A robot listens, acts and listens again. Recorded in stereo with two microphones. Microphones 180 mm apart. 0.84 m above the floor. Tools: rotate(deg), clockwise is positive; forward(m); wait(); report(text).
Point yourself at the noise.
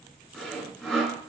rotate(-30)
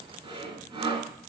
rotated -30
rotate(30)
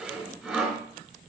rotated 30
report("Facing the sawing.")